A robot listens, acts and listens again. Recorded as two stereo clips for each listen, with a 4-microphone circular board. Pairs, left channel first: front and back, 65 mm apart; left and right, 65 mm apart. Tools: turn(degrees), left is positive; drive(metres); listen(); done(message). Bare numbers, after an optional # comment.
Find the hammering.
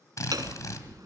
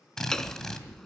# The hammering: 170° left.
turn(170)
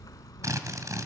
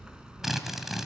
# The hammering is now 15° right.
turn(-15)
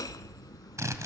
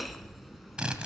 done("Found it: hammering, straight ahead, under 1 m away.")